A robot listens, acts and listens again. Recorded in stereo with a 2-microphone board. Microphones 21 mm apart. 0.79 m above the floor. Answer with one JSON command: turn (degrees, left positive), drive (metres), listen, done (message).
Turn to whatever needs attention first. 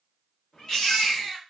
{"turn": 25}
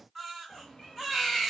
{"done": "Facing the baby crying, 1 to 2 m away."}